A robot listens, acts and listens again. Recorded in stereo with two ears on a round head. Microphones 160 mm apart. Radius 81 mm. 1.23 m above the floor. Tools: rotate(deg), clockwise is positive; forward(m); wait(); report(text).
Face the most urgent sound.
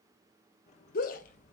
rotate(-50)
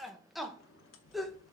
report("Facing the shout, under 1 m away.")